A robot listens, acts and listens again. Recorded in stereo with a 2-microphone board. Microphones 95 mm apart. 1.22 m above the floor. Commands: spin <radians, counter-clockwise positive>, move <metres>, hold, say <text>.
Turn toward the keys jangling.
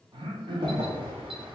spin -1.22
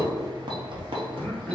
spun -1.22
spin -1.13
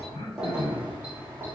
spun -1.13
spin -0.35
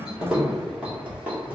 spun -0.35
spin -0.26
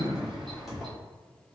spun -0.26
say Facing the keys jangling, 1 to 2 m away.